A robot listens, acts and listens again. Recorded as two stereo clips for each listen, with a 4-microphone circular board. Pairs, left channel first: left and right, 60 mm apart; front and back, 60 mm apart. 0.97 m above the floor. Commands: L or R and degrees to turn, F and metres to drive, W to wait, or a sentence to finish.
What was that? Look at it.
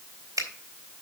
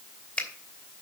R75
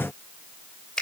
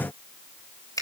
L15
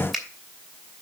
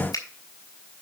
Facing the finger snap.